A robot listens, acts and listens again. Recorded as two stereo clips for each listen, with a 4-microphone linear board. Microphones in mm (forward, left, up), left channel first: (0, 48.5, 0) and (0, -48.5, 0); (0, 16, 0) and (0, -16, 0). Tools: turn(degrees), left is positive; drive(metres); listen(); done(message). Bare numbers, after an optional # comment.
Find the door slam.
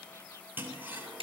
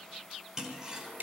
listen()
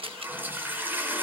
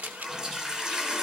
listen()
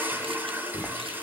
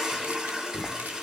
turn(-30)
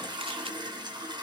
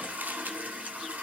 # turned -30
listen()
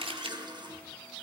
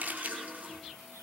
done("I heard a door slam, but can't make it out now. It was about 25° left or 145° right.")